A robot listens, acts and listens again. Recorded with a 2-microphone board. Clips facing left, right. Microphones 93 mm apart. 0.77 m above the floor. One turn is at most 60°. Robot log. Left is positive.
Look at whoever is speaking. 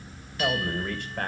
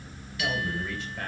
note: The man speaking: about 55° left or 125° left.
cmd yaw +55
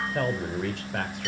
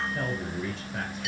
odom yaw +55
note: So it is at 75° left.
cmd yaw +60
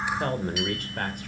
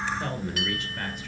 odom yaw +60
note: The man speaking is now 55° left.
cmd yaw +55
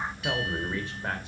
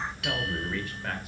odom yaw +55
note: The man speaking is now 25° left.
cmd yaw +25
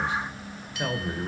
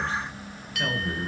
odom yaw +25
note: The man speaking is now 15° left.
cmd yaw +15
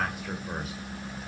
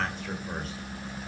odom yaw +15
note: The man speaking is now 10° left.
cmd yaw +10
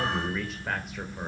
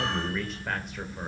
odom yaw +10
end: Facing the man speaking.